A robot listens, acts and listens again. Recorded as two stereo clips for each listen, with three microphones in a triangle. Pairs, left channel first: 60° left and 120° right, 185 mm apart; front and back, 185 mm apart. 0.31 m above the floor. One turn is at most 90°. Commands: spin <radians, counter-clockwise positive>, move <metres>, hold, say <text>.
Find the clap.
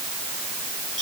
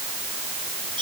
hold
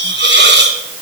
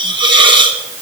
hold
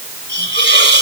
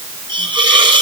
say I can't make out a clap, only a hiss.